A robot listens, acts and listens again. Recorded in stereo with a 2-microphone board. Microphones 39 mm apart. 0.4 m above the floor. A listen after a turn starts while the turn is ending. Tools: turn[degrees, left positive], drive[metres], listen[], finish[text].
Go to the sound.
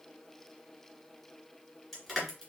Action: turn[30]
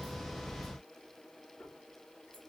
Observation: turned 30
Action: listen[]
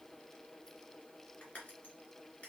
Action: listen[]
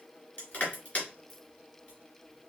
Thought: So it is at 150° left.
Action: turn[150]
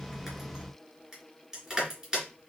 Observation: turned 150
Thought: The crushing is now 10° right.
Action: turn[-10]
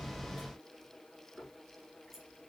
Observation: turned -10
Action: listen[]
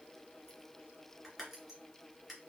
Action: drive[1.0]
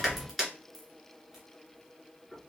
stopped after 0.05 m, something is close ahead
Action: finish[Blocked. The crushing is further on, straight ahead.]